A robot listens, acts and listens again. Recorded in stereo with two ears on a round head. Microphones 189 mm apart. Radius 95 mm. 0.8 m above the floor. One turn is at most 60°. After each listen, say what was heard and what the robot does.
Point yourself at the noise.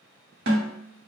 The snare drum: about 60° right or 120° right. Turn 60° right.
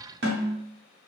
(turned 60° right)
So it is at 60° right. Turn 60° right.
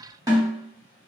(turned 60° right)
The snare drum is now 20° right. Turn 20° right.
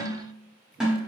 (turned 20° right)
Found it: a snare drum, straight ahead, under 1 m away.